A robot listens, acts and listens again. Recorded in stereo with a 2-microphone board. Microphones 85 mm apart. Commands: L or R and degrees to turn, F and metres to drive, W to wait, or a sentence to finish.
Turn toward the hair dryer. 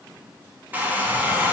R20
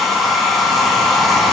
Found it: a hair dryer, straight ahead.